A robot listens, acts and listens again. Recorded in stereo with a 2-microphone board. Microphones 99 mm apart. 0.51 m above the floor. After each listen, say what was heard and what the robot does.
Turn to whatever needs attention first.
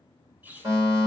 The fire alarm: about 50° right or 130° right. Turn 50° right.
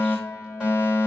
So it is at 10° right. Turn 10° right.
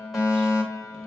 Found it: a fire alarm, straight ahead, 2 to 4 m away.